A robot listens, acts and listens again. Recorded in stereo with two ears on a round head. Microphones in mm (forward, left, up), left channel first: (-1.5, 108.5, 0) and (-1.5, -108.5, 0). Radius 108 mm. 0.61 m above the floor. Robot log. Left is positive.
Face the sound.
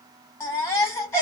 cmd yaw +30
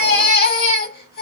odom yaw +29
note: So it is at 140° left.
cmd yaw +140
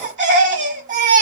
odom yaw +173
note: The baby crying is now 30° right.
cmd yaw -30
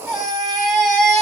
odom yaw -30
end: Facing the baby crying.